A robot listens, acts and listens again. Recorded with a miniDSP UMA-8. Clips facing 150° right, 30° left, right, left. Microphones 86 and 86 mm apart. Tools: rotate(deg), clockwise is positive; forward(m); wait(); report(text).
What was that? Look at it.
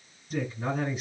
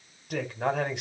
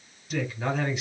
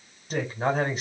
rotate(-40)
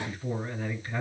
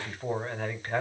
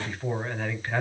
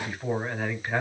report("Facing the man speaking.")